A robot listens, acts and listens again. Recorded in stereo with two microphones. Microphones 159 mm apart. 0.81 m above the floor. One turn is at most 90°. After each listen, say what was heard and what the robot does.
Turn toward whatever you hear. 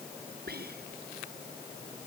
Turn 90° right.
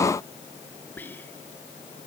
So it is at 10° left. Turn 10° left.
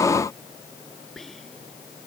Found it: whispering, straight ahead.